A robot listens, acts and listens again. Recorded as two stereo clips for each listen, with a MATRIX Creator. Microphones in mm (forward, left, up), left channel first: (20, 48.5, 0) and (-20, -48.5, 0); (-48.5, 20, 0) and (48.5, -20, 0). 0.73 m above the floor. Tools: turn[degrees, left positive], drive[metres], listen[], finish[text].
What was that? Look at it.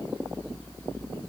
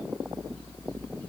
Action: listen[]
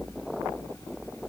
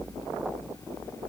Action: listen[]
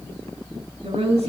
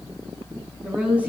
Thought: The woman speaking: 100° right.
Action: turn[-100]
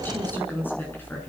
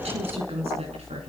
Action: finish[Facing the woman speaking, over 4 m away.]